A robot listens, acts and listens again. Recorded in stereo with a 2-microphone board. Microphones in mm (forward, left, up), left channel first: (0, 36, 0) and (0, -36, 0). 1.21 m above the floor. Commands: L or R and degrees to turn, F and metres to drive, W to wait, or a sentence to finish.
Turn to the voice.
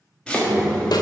R30
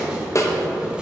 L30
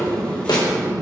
R45
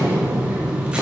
R35
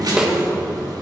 Facing the child speaking, 1 to 2 m away.